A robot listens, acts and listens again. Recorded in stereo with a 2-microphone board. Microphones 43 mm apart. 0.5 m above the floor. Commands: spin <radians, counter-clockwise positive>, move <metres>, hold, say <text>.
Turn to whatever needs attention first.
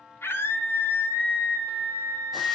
spin 1.22
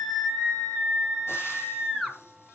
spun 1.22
say Facing the scream, over 4 m away.